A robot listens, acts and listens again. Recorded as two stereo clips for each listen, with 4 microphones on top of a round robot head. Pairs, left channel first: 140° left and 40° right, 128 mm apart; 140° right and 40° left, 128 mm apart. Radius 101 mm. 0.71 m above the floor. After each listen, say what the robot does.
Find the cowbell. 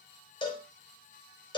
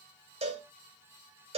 Turn 85° left.
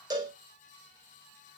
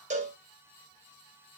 Turn 15° left.
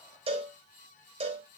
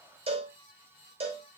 Facing the cowbell.